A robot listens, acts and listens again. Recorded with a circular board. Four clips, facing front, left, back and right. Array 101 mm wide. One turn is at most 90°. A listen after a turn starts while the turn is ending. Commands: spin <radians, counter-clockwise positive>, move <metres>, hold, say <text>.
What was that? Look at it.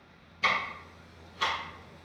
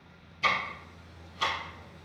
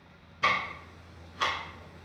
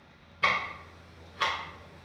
spin -1.57
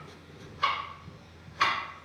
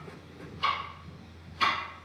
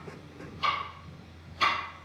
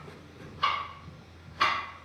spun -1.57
spin -0.79
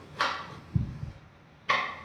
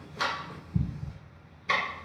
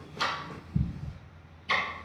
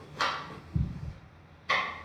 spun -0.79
say Found it: ticking, straight ahead, 1 to 2 m away.